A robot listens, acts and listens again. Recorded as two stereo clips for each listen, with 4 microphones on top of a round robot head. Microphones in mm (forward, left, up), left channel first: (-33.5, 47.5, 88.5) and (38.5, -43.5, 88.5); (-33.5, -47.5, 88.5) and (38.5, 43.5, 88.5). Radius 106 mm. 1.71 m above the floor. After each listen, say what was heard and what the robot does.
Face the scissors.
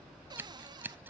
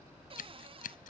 The scissors: 125° right. Turn 125° right.
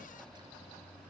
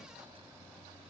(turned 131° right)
Keep listening.
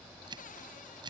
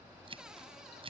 Found it: scissors, straight ahead.